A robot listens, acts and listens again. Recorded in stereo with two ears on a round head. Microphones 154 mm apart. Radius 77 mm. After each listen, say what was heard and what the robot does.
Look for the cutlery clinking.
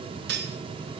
The cutlery clinking: about 65° right or 115° right. Turn 65° right.
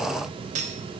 So it is at 40° right. Turn 40° right.
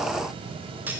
The cutlery clinking is now 10° right. Turn 10° right.
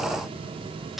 Found it: cutlery clinking, straight ahead.